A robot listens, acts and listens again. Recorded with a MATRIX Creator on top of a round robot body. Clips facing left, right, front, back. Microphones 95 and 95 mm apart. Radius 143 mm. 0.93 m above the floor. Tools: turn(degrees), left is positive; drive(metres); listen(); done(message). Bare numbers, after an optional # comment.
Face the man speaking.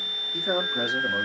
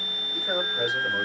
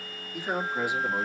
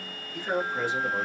# The man speaking: 80° left.
turn(80)
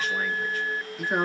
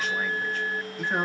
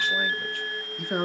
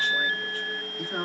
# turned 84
# The man speaking is now 10° left.
turn(10)
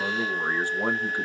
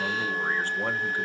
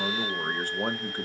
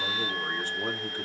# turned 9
# The man speaking is now 25° left.
turn(25)
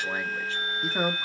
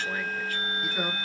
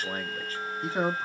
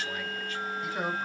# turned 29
# The man speaking is now 50° left.
turn(50)
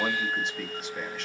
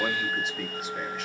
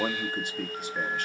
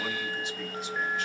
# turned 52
done("Found it: a man speaking, straight ahead, 1 to 2 m away.")